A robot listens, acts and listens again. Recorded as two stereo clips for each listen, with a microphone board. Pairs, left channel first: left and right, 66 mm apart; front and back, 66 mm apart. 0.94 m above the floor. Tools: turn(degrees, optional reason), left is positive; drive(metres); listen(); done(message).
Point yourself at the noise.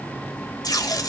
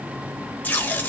turn(degrees=65, reason="The tape being pulled: 65° left.")
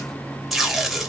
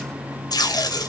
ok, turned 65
done("Found it: tape being pulled, straight ahead, 1 to 2 m away.")